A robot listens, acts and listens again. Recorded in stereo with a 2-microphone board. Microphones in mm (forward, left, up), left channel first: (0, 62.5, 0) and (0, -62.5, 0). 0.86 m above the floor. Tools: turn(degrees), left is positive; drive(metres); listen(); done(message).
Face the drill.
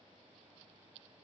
listen()
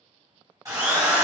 turn(degrees=-30)
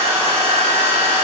turn(degrees=-120)
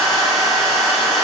done("Facing the drill.")